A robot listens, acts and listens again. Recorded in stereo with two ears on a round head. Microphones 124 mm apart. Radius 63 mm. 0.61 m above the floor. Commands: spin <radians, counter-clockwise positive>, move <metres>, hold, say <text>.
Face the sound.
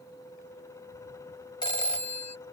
spin 0.61
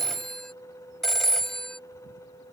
say Facing the phone ringing.